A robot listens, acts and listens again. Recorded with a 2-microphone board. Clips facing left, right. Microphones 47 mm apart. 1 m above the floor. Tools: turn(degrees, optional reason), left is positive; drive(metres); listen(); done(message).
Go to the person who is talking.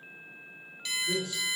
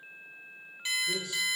turn(degrees=30, reason="The man speaking: about 30° left or 150° left.")
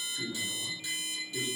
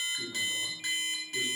drive(metres=1.0)
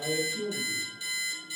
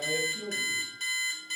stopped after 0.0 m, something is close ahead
done("Blocked. The man speaking is further on, straight ahead.")